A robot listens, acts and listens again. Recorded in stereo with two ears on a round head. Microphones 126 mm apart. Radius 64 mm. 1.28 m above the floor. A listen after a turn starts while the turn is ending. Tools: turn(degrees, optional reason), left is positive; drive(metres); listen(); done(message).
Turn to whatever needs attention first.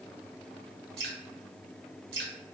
listen()
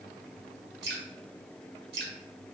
listen()
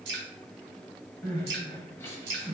turn(degrees=15, reason="The crying: about 15° left or 165° left.")
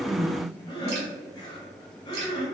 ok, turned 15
turn(degrees=150, reason="So it is at 150° left.")
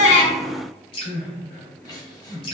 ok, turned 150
turn(degrees=30, reason="The crying is now 30° left.")
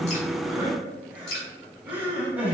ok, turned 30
turn(degrees=-10, reason="The crying is now 10° right.")
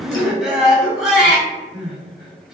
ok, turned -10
done("Found it: crying, straight ahead, under 1 m away.")